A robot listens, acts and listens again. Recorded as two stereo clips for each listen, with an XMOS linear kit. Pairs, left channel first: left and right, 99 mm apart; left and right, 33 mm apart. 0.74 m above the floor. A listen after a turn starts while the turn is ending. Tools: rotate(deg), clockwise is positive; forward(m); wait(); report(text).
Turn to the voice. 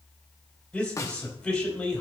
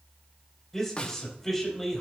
rotate(-30)
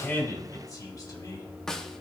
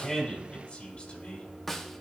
rotate(-140)
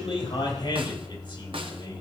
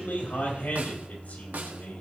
rotate(-65)
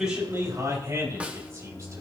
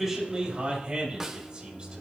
rotate(30)
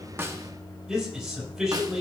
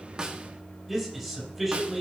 report("Found it: a man speaking, straight ahead.")